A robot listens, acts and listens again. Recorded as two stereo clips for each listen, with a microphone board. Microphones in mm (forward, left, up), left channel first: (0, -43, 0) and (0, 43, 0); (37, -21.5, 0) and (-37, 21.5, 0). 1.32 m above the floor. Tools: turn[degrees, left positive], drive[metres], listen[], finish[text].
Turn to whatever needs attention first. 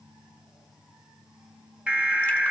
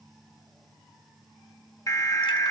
Thought: The alarm: 15° left.
Action: turn[15]
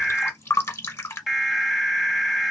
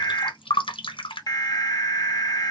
Action: finish[Found it: an alarm, straight ahead, 1 to 2 m away.]